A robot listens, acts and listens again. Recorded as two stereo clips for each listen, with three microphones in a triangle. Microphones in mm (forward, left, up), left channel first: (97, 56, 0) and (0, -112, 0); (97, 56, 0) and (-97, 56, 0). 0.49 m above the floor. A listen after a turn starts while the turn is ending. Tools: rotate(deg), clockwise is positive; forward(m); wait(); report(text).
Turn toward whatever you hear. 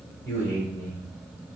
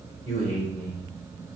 rotate(-75)
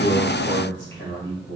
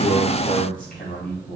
rotate(-45)
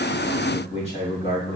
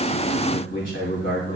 report("Facing the man speaking, 2 to 4 m away.")